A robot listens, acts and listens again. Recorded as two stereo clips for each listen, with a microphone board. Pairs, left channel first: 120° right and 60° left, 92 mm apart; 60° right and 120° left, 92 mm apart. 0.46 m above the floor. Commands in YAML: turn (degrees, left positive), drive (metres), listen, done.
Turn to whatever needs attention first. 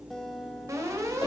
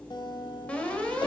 turn: 15
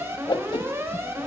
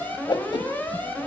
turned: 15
done: "Facing the alarm, 2 to 4 m away."